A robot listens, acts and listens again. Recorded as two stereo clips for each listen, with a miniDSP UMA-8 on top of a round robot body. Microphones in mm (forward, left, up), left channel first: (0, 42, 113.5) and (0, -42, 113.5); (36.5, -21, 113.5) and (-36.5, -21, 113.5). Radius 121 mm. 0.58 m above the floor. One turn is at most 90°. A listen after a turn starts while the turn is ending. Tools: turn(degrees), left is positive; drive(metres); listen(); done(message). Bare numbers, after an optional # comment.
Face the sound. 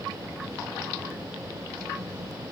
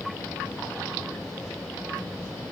listen()
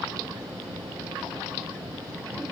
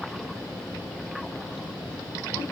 listen()
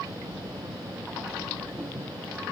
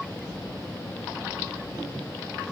done("I can't make out anything to turn to.")